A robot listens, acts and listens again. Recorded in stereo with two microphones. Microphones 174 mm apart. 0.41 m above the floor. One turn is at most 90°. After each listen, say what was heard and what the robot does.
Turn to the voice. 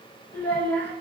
Turn 30° left.
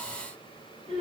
So it is at 140° left. Turn 90° left.
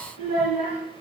The child speaking is now 45° left. Turn 45° left.
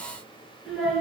Found it: a child speaking, straight ahead, 2 to 4 m away.